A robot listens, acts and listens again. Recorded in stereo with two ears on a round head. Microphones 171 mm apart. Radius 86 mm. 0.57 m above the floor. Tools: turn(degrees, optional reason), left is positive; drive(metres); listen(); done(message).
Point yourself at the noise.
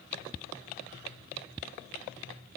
listen()
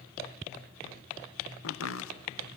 turn(degrees=70, reason="The chopping: about 70° left or 110° left.")
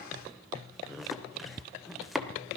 done("Found it: chopping, straight ahead, under 1 m away.")